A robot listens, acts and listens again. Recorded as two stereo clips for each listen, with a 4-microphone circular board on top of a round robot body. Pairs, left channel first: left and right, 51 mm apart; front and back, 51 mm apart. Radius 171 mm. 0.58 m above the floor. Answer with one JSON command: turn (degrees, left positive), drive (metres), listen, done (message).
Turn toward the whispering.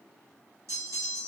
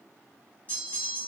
{"listen": true}
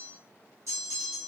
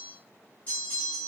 {"listen": true}
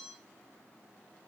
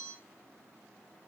{"done": "I can't make out whispering, only a bell."}